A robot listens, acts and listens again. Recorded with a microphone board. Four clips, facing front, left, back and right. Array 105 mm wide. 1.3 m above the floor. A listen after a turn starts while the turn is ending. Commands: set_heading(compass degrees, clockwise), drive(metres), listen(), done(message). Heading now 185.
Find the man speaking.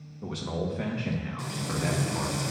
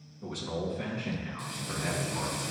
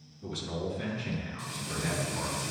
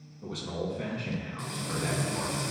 done("Found it: a man speaking, straight ahead, 1 to 2 m away.")